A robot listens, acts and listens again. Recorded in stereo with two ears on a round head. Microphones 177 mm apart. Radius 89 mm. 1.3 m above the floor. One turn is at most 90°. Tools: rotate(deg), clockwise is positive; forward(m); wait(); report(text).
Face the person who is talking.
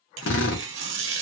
wait()
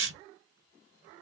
wait()
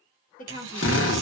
rotate(-45)
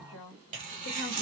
rotate(-90)
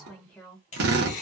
report("Found it: a woman speaking, straight ahead.")